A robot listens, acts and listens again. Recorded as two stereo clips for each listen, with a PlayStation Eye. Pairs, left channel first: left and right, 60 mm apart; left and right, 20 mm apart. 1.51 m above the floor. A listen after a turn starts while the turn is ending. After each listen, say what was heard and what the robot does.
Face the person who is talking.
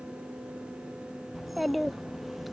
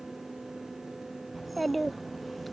Turn 30° left.
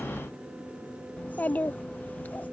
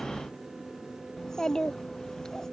So it is at 150° left. Turn 150° left.
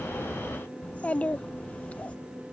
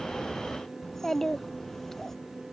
The child speaking is now 25° left. Turn 25° left.
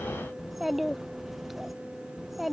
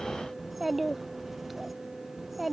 Facing the child speaking.